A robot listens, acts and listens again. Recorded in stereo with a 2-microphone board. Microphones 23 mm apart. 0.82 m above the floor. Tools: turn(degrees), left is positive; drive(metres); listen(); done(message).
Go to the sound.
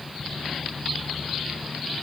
listen()
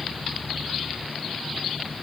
listen()
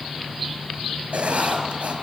turn(degrees=-90)
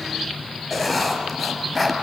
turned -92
drive(metres=1.0)
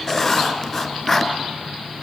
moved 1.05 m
turn(degrees=20)
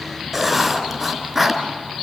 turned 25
drive(metres=1.0)
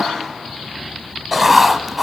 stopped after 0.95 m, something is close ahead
turn(degrees=-10)
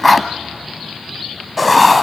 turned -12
done("I am next to the writing.")